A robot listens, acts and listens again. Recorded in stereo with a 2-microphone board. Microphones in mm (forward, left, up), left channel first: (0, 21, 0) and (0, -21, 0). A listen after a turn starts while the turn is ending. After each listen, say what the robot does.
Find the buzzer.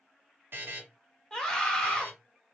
Turn 60° right.
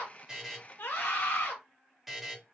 Facing the buzzer.